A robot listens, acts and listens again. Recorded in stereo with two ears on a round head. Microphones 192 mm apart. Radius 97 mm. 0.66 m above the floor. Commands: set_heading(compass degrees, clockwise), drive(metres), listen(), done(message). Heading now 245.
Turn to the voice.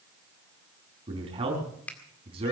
set_heading(270)
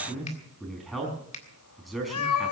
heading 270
done("Found it: a man speaking, straight ahead, over 4 m away.")